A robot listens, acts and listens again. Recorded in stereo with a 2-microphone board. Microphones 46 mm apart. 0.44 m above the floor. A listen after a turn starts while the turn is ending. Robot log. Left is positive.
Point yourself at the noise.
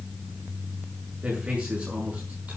note: The man speaking: about 30° right or 150° right.
cmd yaw -30
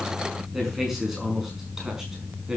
note: So it is at 15° right.
cmd yaw -15
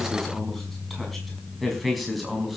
end: Facing the man speaking, over 4 m away.